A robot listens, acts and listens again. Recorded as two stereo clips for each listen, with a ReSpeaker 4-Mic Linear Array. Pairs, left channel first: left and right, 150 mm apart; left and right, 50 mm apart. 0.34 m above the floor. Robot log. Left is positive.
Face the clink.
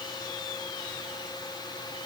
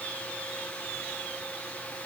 cmd idle
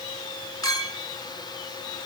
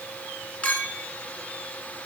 note: The clink: about 25° left or 155° left.
cmd yaw +25
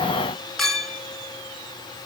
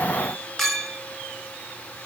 end: Facing the clink, 2 to 4 m away.